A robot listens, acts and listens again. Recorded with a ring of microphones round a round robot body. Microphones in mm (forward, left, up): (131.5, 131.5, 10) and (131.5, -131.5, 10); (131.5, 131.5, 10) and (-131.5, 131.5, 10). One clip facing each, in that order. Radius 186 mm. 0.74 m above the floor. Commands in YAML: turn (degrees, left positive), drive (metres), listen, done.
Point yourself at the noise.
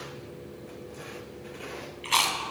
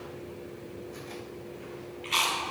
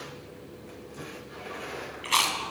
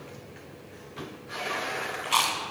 turn: 65
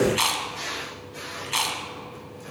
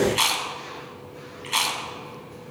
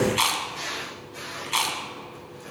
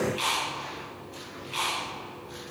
done: "Found it: chewing, straight ahead, 2 to 4 m away."